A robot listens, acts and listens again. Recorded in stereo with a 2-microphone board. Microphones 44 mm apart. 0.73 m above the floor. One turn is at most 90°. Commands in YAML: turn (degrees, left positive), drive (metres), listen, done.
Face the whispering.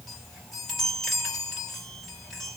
listen: true
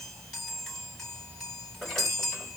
listen: true
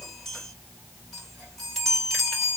done: "I can't make out whispering to turn to."